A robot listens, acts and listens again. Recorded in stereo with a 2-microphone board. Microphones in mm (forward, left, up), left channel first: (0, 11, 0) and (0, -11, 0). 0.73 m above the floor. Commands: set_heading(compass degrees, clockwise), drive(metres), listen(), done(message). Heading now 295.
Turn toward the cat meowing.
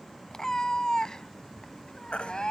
set_heading(250)
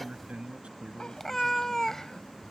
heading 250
set_heading(225)
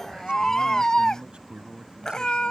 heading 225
set_heading(180)
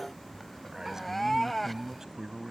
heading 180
set_heading(170)
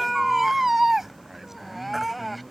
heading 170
done("Found it: a cat meowing, straight ahead.")